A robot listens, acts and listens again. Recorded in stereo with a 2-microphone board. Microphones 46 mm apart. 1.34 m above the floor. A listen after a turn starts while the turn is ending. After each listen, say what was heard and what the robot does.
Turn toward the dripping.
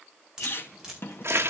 Turn 30° right.
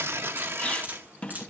So it is at 140° right. Turn 140° right.
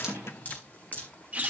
The dripping is now 35° left. Turn 35° left.
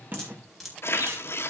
Facing the dripping.